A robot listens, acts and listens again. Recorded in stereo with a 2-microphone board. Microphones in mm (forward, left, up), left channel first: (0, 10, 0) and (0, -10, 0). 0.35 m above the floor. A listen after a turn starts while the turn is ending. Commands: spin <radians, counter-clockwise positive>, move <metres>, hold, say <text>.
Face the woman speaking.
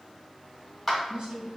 spin -0.96
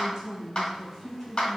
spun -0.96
say Facing the woman speaking, 1 to 2 m away.